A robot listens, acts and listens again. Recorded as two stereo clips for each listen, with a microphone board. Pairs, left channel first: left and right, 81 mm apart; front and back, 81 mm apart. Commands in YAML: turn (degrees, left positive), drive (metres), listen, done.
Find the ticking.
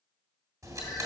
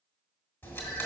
turn: -55
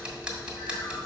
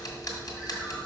turn: -10
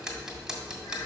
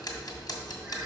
done: "Found it: ticking, straight ahead."